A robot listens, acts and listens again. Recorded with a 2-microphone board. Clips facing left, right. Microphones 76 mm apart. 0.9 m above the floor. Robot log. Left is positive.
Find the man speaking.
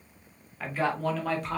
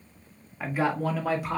cmd yaw -30
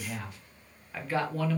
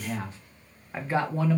note: The man speaking: about 20° right or 160° right.
cmd yaw -20
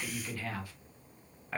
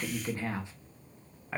cmd yaw -30
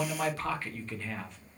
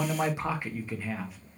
cmd yaw -30
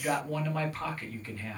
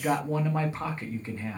note: So it is at 155° right.
cmd yaw -155
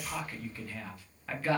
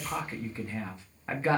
note: The man speaking is now 25° right.
cmd yaw -25
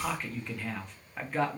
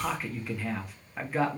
end: Facing the man speaking, 1 to 2 m away.